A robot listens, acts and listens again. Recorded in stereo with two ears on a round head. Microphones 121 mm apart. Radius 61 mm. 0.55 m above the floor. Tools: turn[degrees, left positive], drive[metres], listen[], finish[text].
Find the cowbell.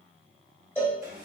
Thought: The cowbell: about 15° left or 165° left.
Action: turn[15]
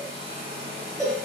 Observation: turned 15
Action: finish[Found it: a cowbell, straight ahead.]